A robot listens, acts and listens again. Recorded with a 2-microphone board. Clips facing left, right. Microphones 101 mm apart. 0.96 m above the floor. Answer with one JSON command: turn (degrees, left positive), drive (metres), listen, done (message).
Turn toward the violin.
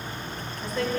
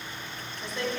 {"listen": true}
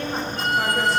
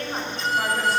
{"turn": 60}
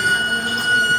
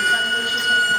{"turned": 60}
{"turn": 25}
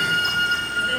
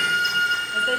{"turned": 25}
{"done": "Facing the violin, under 1 m away."}